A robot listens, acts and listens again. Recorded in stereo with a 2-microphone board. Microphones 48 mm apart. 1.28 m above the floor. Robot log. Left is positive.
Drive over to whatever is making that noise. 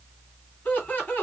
note: The laughter: about 35° left or 145° left.
cmd yaw +35
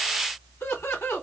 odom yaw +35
note: So it is at 115° left.
cmd yaw +115
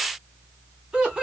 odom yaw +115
note: The laughter is now 15° right.
cmd yaw -15
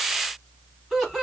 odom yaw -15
cmd fwd 1.0
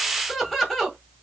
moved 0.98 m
cmd fwd 1.0
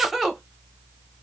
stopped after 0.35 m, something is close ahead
end: I am next to the laughter.